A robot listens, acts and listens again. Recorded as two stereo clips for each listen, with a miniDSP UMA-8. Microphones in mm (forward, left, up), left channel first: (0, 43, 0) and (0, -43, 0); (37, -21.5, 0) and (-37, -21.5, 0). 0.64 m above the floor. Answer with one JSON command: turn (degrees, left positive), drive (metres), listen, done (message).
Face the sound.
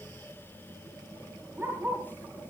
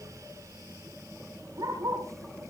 {"turn": -155}
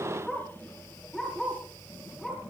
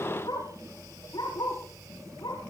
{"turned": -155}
{"done": "Found it: a dog barking, straight ahead."}